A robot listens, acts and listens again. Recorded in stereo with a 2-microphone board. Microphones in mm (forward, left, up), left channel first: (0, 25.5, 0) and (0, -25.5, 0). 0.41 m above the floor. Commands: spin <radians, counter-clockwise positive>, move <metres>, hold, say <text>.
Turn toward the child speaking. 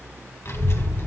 spin 0.96
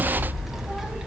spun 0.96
spin -0.17
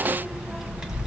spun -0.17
spin -0.17
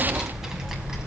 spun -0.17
spin -0.17
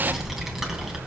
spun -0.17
spin -0.17
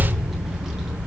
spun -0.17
spin -0.17
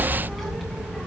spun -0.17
say Found it: a child speaking, straight ahead.